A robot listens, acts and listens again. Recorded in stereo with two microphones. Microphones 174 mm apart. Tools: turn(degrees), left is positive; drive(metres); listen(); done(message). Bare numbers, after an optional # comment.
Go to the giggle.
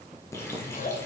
# The giggle: about 50° left or 130° left.
turn(50)
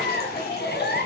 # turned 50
# So it is at 80° left.
turn(80)
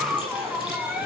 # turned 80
drive(1.0)
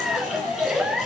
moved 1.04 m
drive(1.0)
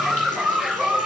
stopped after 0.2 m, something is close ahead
done("Arrived at the giggle, straight ahead.")